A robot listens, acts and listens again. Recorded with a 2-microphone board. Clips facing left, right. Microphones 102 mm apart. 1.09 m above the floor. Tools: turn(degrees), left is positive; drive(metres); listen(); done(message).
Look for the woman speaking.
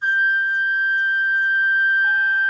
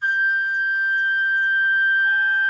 listen()
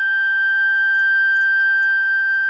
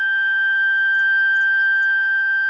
listen()
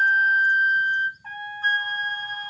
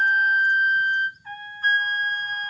done("I can't make out a woman speaking to turn to.")